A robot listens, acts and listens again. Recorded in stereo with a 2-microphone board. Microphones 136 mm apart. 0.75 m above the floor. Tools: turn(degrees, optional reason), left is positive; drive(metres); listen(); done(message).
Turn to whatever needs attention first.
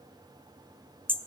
listen()
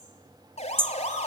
turn(degrees=55, reason="The siren: about 55° left or 125° left.")
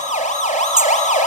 turn(degrees=65, reason="So it is at 65° left.")
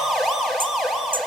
done("Facing the siren.")